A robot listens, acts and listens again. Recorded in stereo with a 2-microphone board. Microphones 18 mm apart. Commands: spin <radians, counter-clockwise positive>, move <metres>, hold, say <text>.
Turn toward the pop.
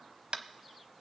hold
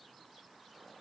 hold
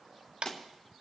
spin 1.13
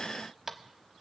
hold
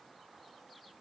say I heard a pop, but can't make it out now. It was about straight ahead or 50° left.